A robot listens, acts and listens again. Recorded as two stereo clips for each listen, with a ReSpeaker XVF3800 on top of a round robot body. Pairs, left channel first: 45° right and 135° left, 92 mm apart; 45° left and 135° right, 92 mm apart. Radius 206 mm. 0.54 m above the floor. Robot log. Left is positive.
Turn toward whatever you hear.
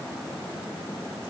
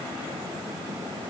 cmd idle
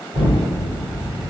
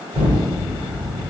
note: The explosion: 155° left.
cmd yaw +155
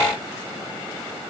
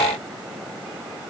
end: Facing where the explosion came from. I can't hear it now.